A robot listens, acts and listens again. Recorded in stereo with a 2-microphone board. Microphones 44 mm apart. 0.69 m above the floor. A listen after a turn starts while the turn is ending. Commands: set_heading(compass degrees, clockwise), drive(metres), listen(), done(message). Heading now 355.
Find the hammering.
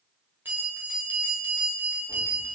listen()
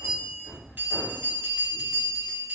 set_heading(55)
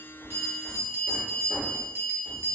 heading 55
listen()
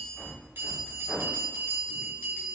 set_heading(65)
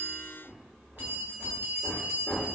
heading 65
done("Found it: hammering, straight ahead, 1 to 2 m away.")